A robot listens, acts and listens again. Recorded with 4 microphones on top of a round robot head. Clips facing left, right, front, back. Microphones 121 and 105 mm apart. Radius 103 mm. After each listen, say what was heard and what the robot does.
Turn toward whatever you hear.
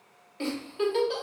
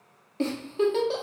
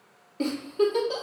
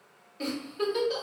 The giggle: 40° right. Turn 40° right.
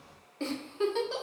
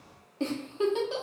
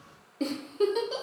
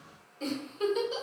The giggle is now 20° right. Turn 20° right.
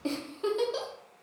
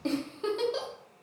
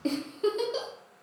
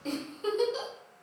Found it: a giggle, straight ahead, 1 to 2 m away.